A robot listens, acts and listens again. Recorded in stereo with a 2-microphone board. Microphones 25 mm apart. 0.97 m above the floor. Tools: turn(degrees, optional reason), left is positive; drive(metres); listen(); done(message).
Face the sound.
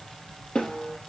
turn(degrees=45, reason="The snare drum: about 45° left or 135° left.")
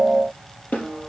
turn(degrees=90, reason="So it is at 90° left.")
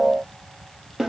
turn(degrees=-10, reason="The snare drum is now 10° right.")
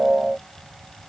listen()
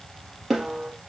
done("Found it: a snare drum, straight ahead.")